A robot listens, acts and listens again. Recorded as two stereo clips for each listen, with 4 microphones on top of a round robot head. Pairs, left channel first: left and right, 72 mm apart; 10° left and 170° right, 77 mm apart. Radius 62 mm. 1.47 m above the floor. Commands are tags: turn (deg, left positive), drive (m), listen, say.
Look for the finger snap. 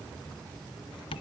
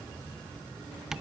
<listen/>
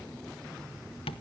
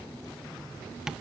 <listen/>
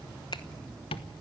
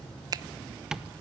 <turn deg="145"/>
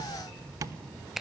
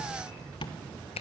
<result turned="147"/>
<say>Found it: a finger snap, straight ahead, under 1 m away.</say>